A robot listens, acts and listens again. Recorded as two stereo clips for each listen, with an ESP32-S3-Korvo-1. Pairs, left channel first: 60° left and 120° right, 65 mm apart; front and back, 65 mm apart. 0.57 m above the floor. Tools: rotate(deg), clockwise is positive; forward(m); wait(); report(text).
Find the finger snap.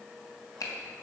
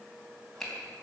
rotate(-85)
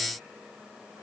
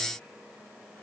wait()
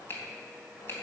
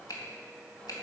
report("Facing the finger snap.")